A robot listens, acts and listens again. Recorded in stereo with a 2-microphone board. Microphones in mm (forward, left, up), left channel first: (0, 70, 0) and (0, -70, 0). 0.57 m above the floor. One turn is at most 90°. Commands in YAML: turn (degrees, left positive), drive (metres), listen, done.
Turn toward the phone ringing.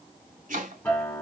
listen: true
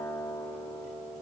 listen: true
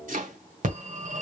turn: -65
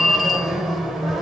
done: "Found it: a phone ringing, straight ahead."